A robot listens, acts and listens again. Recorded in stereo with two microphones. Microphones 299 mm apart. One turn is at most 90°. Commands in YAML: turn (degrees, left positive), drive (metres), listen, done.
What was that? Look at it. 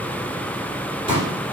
turn: 20
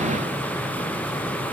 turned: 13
listen: true
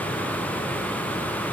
done: "I heard a pop, but can't make it out now. It was about 5° left or 145° left."